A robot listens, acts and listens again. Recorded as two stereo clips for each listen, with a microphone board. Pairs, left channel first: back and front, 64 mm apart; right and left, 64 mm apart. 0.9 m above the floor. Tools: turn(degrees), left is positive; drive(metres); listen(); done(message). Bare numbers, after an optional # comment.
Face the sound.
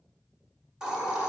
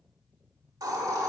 # The hiss: 75° left.
turn(75)
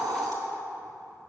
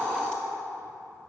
# The hiss is now 20° right.
turn(-20)
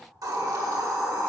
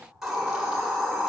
done("Found it: a hiss, straight ahead.")